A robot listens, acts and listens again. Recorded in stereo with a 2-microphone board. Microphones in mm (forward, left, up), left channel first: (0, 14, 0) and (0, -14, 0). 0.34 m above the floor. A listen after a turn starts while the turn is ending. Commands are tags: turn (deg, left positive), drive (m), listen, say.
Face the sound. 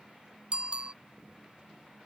<turn deg="-40"/>
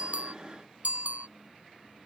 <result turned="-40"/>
<turn deg="-100"/>
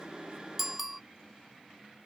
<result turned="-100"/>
<say>Found it: a bicycle bell, straight ahead.</say>